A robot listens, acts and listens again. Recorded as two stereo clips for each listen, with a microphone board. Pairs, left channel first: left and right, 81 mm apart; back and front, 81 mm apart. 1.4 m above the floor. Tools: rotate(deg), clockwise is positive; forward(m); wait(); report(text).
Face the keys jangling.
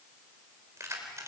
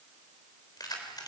rotate(145)
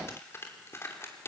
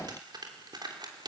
rotate(-30)
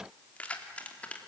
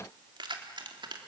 rotate(-15)
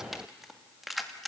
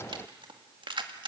report("Found it: keys jangling, straight ahead.")